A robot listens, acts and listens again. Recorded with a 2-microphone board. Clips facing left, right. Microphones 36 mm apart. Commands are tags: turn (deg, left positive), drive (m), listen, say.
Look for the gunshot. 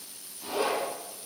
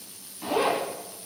<listen/>
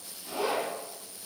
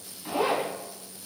<listen/>
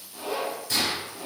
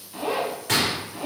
<turn deg="-90"/>
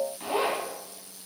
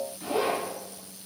<say>Facing where the gunshot came from. I can't hear it now.</say>